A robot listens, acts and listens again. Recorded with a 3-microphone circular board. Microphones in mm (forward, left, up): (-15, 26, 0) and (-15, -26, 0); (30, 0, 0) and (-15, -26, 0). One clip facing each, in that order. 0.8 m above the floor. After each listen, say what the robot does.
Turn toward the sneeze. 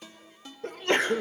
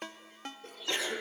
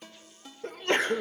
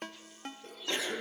Turn 60° left.
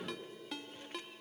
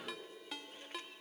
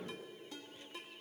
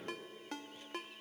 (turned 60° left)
Facing where the sneeze came from. I can't hear it now.